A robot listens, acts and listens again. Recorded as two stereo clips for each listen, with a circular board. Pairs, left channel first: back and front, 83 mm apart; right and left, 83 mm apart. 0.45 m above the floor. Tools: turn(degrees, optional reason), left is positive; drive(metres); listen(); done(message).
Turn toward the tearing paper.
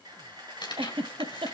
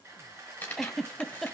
turn(degrees=-155, reason="The tearing paper: 155° right.")
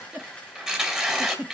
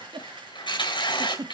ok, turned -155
turn(degrees=-80, reason="The tearing paper is now 80° right.")
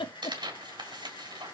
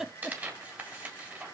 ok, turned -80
turn(degrees=25, reason="The tearing paper is now 25° left.")
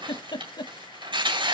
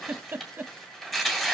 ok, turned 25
done("Found it: tearing paper, straight ahead, 2 to 4 m away.")